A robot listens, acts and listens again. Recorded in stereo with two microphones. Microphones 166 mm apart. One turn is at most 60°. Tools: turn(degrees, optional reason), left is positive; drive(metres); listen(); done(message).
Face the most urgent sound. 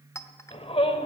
turn(degrees=35, reason="The shout: about 35° left or 145° left.")
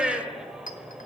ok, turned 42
done("Facing the shout, 1 to 2 m away.")